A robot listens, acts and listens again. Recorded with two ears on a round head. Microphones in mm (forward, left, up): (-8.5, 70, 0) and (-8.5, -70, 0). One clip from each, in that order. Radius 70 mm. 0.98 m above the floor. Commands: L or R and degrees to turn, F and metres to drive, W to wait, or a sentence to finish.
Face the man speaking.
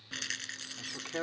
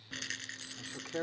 L65
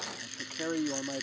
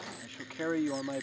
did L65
R20
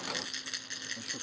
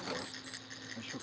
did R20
W
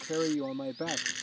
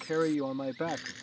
R40
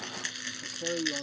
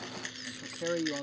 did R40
R30
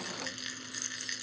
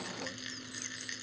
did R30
W
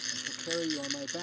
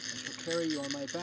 R20
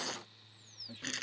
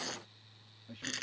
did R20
Found it: a man speaking, straight ahead.